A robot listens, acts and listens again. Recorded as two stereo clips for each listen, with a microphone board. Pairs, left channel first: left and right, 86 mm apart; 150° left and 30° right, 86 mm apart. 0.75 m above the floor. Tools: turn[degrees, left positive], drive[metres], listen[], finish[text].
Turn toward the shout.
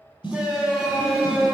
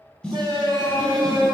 Thought: The shout: 10° right.
Action: turn[-10]
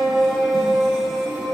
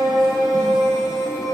Action: finish[Facing the shout, 1 to 2 m away.]